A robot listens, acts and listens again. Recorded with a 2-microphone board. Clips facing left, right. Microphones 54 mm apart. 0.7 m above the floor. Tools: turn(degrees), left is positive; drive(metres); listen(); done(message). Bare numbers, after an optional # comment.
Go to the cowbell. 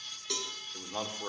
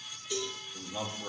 turn(90)
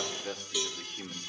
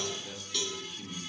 # So it is at 10° left.
turn(10)
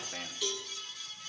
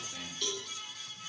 drive(1.0)
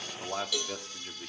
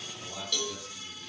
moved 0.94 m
drive(1.0)
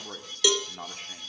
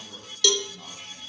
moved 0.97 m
# The cowbell is now 20° left.
turn(20)
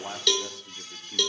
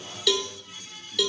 drive(1.0)
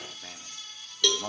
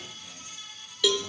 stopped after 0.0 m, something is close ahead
done("Arrived at the cowbell, straight ahead.")